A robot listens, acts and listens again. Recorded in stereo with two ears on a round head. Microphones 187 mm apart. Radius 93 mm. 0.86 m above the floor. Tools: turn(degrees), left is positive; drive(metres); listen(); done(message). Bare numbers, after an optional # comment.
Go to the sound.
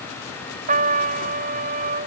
# The trumpet: about 40° right or 140° right.
turn(-40)
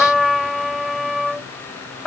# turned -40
drive(1.0)
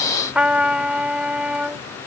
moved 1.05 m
drive(1.0)
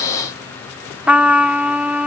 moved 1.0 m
drive(1.0)
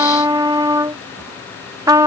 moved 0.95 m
# The trumpet is now 20° right.
turn(-20)
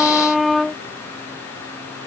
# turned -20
drive(1.0)
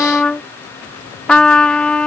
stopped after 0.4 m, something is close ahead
done("I am next to the trumpet.")